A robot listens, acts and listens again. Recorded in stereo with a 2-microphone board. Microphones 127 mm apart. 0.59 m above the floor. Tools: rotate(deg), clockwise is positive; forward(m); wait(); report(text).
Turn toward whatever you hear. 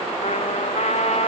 rotate(-60)
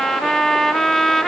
report("Found it: a trumpet, straight ahead, under 1 m away.")